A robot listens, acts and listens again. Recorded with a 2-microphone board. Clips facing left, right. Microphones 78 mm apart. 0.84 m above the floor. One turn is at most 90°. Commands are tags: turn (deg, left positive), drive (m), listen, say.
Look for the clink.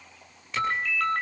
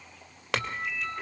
<turn deg="-90"/>
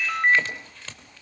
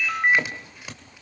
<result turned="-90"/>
<turn deg="-15"/>
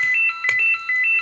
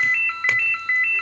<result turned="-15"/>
<listen/>
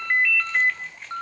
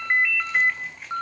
<listen/>
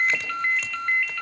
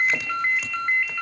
<say>Facing where the clink came from. I can't hear it now.</say>